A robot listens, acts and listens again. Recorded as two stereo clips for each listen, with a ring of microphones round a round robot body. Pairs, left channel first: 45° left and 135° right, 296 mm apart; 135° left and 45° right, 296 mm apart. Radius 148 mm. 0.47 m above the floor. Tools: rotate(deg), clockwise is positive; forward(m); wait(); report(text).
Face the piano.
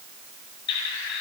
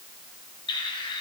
wait()
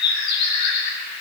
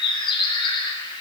wait()
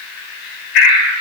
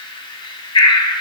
report("I can't make out a piano, only a bird.")